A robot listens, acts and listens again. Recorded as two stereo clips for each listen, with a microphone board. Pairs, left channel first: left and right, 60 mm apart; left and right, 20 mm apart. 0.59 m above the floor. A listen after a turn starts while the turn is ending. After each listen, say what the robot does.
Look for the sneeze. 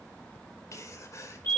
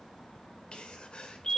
Turn 60° left.
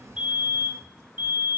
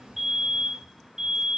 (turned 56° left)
Keep listening.
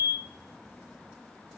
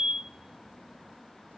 I heard a sneeze, but can't make it out now. It was about 5° left or 65° left.